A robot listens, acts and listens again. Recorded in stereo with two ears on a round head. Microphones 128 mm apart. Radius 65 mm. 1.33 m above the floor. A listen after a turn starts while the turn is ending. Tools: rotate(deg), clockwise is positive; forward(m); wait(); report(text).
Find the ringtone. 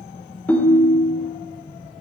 rotate(-30)
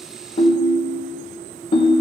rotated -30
rotate(-140)
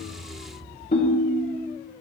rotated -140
rotate(-45)
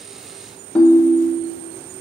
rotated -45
report("Found it: a ringtone, straight ahead, under 1 m away.")